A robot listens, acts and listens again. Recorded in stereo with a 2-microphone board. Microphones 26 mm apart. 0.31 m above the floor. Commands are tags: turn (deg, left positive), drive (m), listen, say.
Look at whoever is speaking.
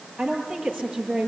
<turn deg="-35"/>
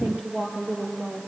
<turn deg="-110"/>
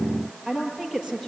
<turn deg="-20"/>
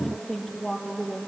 <say>Facing the woman speaking, over 4 m away.</say>